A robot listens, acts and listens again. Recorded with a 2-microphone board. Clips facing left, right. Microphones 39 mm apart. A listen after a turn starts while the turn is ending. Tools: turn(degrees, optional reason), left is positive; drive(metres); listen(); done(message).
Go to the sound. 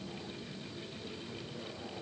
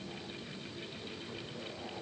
listen()
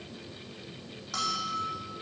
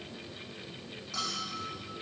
turn(degrees=90)
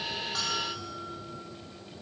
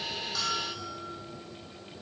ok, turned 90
turn(degrees=10, reason="So it is at 10° left.")
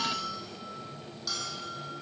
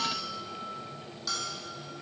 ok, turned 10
drive(metres=1.0)
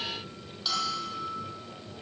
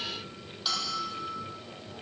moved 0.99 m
drive(metres=1.0)
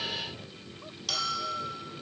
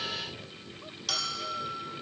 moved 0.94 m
drive(metres=1.0)
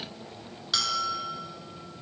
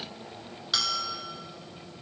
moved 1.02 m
drive(metres=1.0)
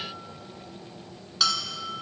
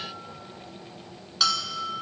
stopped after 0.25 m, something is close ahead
done("I am next to the bell.")